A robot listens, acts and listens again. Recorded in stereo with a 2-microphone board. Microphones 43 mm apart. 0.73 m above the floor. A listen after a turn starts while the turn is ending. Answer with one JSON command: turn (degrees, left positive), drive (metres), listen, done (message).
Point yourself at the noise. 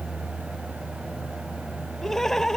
{"turn": 30}
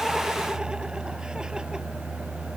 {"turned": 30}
{"listen": true}
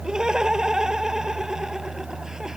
{"turn": -15}
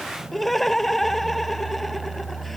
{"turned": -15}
{"done": "Found it: laughter, straight ahead."}